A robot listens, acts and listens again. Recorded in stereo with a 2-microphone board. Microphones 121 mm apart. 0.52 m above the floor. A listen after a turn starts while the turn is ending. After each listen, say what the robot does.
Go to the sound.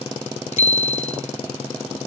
Turn 75° left.
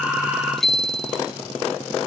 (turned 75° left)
Drive 1.0 m forward.
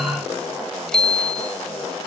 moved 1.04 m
Drive 1.0 m forward.
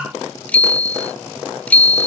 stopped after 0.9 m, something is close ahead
Turn 15° left.
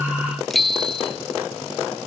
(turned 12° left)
Arrived at the bicycle bell, straight ahead.